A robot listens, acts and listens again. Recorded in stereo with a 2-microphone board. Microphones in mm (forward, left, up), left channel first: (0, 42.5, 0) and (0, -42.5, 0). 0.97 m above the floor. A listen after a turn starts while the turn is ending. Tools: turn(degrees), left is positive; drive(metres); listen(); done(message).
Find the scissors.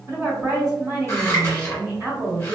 turn(degrees=35)
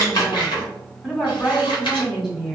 turn(degrees=110)
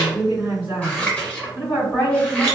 turn(degrees=15)
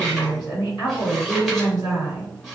done("Facing the scissors.")